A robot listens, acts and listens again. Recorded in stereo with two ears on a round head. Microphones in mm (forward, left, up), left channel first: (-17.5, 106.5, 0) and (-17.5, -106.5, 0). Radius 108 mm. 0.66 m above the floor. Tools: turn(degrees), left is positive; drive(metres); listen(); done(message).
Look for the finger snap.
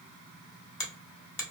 turn(degrees=15)
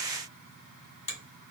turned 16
turn(degrees=150)
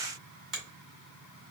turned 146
done("Found it: a finger snap, straight ahead, 1 to 2 m away.")